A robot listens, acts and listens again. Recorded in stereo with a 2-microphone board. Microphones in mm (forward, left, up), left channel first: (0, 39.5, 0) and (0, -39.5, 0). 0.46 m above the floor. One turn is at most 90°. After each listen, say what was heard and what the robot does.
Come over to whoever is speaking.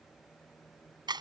Keep listening.
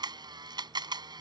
Keep listening.
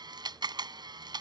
I can't make out anyone speaking to turn to.